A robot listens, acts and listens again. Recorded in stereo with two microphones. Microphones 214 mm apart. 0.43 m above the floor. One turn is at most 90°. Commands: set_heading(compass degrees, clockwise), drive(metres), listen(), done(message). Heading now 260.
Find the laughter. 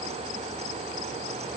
listen()
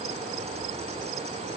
listen()
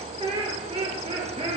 set_heading(290)
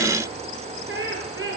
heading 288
set_heading(18)
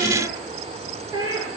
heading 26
set_heading(41)
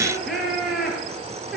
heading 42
done("Facing the laughter, over 4 m away.")